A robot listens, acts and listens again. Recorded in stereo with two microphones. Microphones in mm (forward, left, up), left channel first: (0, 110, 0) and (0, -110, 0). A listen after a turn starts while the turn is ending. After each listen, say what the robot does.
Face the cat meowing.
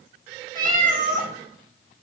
Turn 40° right.
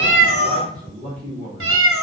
Turn 100° right.
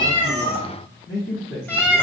Turn 10° left.
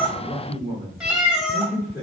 Found it: a cat meowing, straight ahead, under 1 m away.